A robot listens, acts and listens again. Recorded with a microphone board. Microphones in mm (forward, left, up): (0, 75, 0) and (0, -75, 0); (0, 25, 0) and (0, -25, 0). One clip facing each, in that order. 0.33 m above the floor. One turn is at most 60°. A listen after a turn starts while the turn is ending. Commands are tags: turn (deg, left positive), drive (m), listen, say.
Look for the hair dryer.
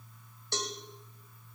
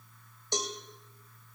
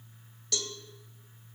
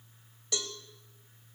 <listen/>
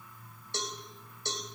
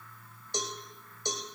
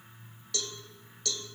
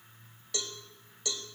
<listen/>
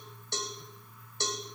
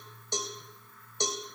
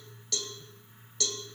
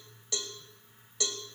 <say>I can't make out a hair dryer to turn to.</say>